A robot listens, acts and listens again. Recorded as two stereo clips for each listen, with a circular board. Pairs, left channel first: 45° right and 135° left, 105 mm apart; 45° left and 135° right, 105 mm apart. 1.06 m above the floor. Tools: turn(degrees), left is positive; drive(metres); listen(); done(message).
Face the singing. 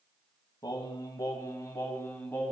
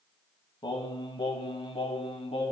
turn(degrees=25)
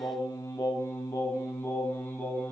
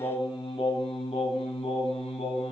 turn(degrees=30)
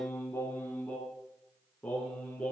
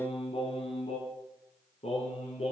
turn(degrees=35)
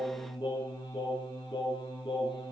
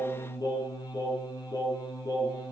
done("Found it: singing, straight ahead, over 4 m away.")